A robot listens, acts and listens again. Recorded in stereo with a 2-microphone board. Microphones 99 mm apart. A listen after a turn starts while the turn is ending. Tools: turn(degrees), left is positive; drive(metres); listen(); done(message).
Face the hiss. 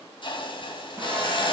turn(degrees=55)
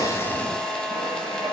listen()
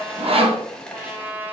turn(degrees=10)
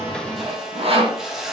done("Facing the hiss, 1 to 2 m away.")